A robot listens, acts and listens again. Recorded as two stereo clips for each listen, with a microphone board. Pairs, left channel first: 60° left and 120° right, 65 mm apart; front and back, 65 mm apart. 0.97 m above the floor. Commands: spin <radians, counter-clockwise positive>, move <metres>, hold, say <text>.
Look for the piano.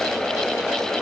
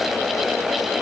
hold
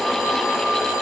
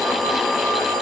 hold
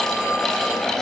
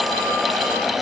say I can't make out a piano to turn to.